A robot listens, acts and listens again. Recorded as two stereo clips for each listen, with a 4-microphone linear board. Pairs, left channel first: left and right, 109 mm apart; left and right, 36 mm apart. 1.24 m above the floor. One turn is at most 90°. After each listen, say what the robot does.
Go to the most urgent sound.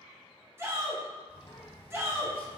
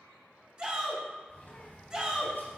Turn 25° right.
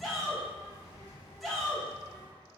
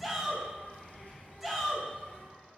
Drive 1.0 m forward.
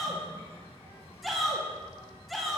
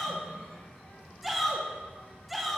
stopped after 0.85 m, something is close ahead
Arrived at the shout, straight ahead.